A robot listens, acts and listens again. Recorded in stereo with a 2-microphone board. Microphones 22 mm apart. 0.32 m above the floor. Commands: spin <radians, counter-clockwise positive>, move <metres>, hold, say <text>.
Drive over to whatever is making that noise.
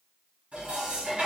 spin -1.22
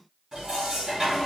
spin -0.44
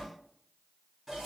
move 1.0
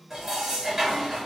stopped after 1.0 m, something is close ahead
spin -0.26
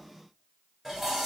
say Arrived at the dishes clattering, straight ahead.